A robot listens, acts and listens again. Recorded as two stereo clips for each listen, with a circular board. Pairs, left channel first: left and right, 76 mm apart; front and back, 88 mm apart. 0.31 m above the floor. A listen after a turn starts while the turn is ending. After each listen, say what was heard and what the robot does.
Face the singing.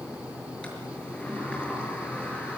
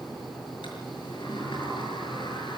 Keep listening.
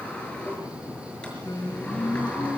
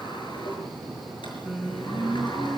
The singing: 95° left. Turn 95° left.
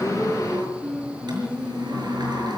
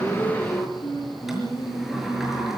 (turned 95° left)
The singing is now 10° right. Turn 10° right.
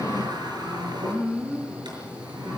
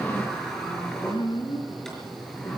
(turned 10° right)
Facing the singing, 2 to 4 m away.